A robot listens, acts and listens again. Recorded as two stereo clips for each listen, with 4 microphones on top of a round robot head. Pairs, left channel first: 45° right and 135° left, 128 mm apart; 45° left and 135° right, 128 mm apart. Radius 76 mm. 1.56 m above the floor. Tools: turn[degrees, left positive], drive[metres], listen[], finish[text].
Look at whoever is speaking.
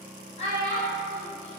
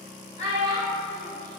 Action: finish[Found it: a child speaking, straight ahead, 1 to 2 m away.]